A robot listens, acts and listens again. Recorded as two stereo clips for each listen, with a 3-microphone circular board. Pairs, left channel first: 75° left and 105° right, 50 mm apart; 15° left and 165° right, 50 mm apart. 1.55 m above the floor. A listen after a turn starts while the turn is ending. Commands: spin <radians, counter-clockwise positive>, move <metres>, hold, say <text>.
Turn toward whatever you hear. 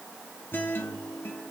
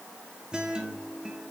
spin 2.09
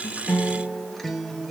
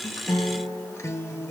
spin -0.17
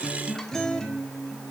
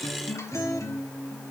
say Facing the guitar, 1 to 2 m away.